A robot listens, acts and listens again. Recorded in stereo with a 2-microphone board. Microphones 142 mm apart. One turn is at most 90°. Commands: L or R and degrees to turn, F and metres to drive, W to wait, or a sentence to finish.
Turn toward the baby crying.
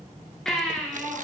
L30
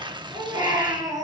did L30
R25
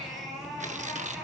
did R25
Found it: a baby crying, straight ahead.